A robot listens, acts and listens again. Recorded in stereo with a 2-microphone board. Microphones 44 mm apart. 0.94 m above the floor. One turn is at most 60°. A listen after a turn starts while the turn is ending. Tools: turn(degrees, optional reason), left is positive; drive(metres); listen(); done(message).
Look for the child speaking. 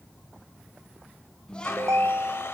turn(degrees=20, reason="The child speaking: about 20° left or 160° left.")
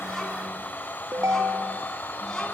listen()
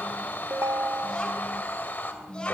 turn(degrees=20, reason="The child speaking: about 20° left or 160° left.")
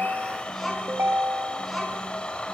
done("Facing the child speaking.")